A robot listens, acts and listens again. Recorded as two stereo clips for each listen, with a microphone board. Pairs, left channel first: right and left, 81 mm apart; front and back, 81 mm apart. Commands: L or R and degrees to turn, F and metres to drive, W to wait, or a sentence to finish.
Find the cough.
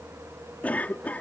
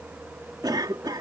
R160
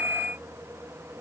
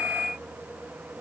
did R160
W
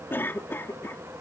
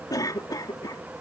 R30
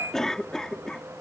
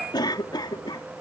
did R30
Found it: a cough, straight ahead.